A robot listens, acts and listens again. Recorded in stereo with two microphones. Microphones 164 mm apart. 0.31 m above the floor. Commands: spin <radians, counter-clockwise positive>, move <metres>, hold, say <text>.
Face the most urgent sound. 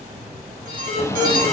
spin -1.13
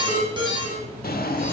spin -0.61
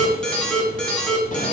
say Facing the alarm, 2 to 4 m away.